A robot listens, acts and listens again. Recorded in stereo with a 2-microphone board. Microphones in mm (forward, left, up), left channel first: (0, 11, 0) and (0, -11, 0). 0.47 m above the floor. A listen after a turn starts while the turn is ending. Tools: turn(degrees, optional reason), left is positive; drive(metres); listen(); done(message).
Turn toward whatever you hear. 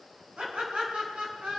turn(degrees=-55, reason="The laughter: about 55° right or 125° right.")
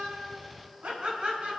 turn(degrees=-70, reason="So it is at 70° right.")
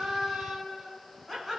done("Found it: laughter, straight ahead.")